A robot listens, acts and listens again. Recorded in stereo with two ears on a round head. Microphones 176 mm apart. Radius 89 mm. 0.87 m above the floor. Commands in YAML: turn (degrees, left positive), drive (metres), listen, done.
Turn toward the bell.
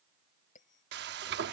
turn: 40
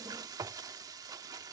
listen: true
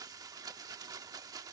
listen: true
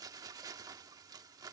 done: "I heard a bell, but can't make it out now. It was about straight ahead or 100° left."